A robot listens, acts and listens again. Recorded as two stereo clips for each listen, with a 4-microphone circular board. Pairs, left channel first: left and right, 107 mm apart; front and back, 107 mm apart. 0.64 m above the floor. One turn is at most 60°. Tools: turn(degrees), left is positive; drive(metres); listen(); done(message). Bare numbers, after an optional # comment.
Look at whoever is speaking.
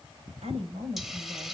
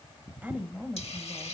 # The woman speaking: 100° right.
turn(-60)
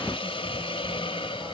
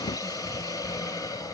# Nothing new. It was at 40° right.
turn(-40)
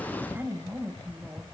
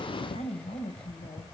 # The woman speaking is now 15° right.
turn(-15)
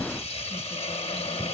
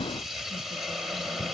listen()
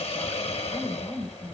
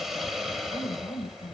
done("Facing the woman speaking.")